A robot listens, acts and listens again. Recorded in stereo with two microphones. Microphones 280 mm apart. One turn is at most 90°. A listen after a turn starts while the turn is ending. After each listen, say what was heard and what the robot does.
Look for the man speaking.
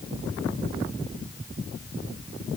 Keep listening.
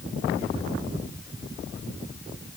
Keep listening.
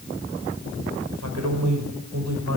The man speaking: about 70° right or 110° right. Turn 70° right.
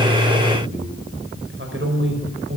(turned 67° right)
So it is at 45° right. Turn 45° right.
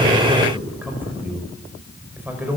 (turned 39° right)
Facing the man speaking, over 4 m away.